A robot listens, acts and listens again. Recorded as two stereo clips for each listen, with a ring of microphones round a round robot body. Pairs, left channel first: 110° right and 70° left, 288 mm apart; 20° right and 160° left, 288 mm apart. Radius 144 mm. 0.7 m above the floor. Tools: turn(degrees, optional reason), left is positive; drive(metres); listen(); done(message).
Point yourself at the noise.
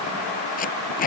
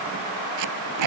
turn(degrees=-175, reason="The tape being pulled: 175° right.")
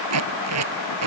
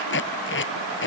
turn(degrees=30, reason="The tape being pulled is now 30° left.")
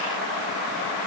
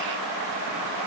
listen()
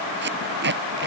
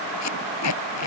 turn(degrees=10, reason="The tape being pulled is now 10° left.")
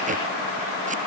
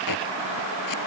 listen()
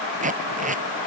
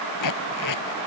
done("Facing the tape being pulled.")